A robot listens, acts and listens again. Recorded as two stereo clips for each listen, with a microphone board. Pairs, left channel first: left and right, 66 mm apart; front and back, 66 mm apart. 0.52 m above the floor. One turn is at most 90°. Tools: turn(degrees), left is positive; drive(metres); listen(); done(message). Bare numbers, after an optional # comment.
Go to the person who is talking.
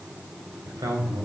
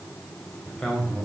# The man speaking: 75° right.
turn(-75)
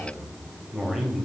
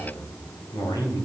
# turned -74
drive(1.0)
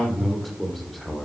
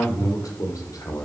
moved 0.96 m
drive(1.0)
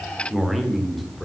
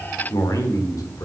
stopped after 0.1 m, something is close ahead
done("Arrived at the man speaking, straight ahead.")